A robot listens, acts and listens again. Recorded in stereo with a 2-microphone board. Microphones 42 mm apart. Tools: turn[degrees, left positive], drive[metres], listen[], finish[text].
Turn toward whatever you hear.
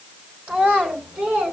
Thought: The child speaking: about 35° right or 145° right.
Action: turn[-35]
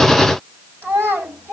Thought: So it is at 95° right.
Action: turn[-95]
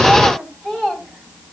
Action: finish[Found it: a child speaking, straight ahead, over 4 m away.]